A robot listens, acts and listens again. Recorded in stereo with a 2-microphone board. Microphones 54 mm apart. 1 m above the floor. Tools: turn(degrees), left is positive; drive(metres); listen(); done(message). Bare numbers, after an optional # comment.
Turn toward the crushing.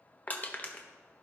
# The crushing: about 30° left or 150° left.
turn(30)
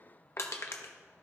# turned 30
# So it is at 115° left.
turn(115)
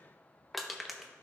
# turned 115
done("Facing the crushing, under 1 m away.")